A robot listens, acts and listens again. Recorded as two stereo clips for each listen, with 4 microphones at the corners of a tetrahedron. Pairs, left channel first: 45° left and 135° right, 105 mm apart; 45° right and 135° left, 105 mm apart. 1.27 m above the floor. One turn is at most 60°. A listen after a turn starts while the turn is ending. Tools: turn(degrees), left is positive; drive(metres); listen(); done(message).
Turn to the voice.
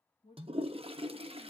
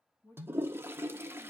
turn(degrees=20)
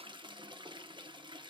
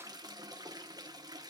listen()
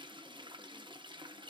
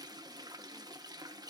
listen()
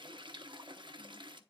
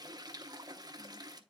done("I heard a woman speaking from this way, but can't make it out now.")